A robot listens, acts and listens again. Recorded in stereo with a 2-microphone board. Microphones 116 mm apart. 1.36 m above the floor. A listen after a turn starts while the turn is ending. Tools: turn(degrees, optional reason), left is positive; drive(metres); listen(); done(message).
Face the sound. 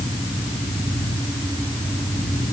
listen()
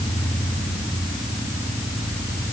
listen()
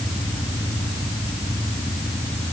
done("I can't make out anything.")